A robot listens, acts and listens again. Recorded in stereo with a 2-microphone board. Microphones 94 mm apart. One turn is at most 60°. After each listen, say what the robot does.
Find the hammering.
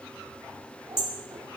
Turn 60° left.
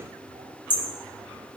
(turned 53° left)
Turn 20° left.
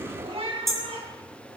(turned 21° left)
Facing the hammering.